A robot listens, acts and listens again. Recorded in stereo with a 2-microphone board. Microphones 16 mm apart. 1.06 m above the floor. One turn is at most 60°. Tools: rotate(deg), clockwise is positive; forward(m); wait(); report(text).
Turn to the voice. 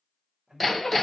rotate(45)
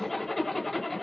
wait()
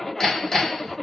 wait()
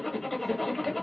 report("I heard a man speaking, but can't make it out now. It was about straight ahead or 90° right.")